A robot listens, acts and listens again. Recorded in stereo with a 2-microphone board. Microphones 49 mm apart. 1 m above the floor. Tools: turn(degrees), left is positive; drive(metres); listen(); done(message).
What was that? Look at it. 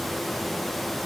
listen()
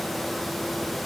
listen()
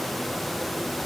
done("I can't make out anything to turn to.")